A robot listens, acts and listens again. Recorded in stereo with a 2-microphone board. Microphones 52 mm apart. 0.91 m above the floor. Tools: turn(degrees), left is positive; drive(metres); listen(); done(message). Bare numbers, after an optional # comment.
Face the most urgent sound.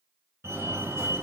# The fire alarm: about 60° right or 120° right.
turn(-60)
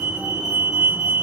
# So it is at 30° right.
turn(-30)
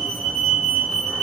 done("Found it: a fire alarm, straight ahead.")